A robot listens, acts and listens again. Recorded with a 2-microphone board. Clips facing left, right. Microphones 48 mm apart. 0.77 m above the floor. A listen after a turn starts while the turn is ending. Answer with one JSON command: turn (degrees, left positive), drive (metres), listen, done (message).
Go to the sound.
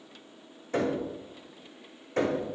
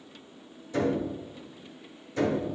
{"turn": 55}
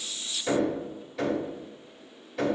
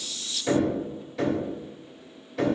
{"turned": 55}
{"drive": 1.0}
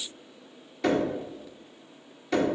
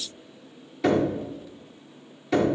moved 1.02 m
{"drive": 1.0}
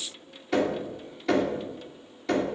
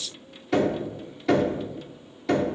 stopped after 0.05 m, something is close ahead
{"done": "Arrived at the knocking, straight ahead."}